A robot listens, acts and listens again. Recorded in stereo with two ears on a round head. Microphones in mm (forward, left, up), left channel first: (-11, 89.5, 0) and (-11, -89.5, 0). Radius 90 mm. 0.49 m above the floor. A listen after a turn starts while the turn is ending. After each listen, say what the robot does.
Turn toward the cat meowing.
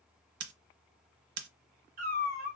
Turn 45° right.
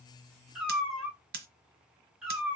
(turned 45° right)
Facing the cat meowing.